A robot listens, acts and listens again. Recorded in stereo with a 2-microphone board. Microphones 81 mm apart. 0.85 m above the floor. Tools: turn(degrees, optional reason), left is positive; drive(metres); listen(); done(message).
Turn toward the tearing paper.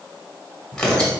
turn(degrees=30)
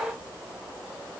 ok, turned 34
listen()
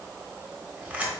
turn(degrees=-25, reason="So it is at 25° right.")
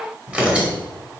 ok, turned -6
turn(degrees=-15, reason="The tearing paper is now 15° right.")
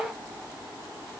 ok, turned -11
listen()
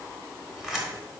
done("Facing the tearing paper.")